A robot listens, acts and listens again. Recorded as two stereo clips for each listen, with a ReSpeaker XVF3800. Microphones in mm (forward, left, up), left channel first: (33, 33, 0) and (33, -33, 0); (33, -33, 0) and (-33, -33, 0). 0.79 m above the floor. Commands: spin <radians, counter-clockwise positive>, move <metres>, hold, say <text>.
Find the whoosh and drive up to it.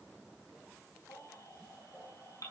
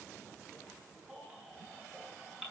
hold
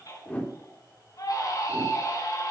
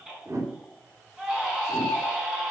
spin 2.62
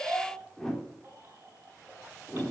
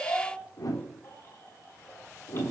spin 0.17
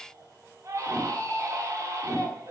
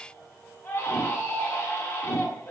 move 1.0
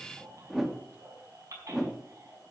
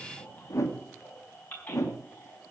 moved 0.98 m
move 1.0
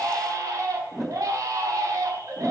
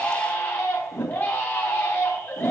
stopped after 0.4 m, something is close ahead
say I am next to the whoosh.